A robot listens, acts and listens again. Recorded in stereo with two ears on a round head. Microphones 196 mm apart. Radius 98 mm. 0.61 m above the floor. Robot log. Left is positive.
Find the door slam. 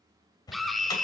note: The door slam: about 20° left or 160° left.
cmd yaw +20
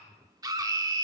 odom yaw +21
cmd idle
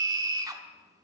end: I heard a door slam, but can't make it out now. It was about straight ahead or 140° left.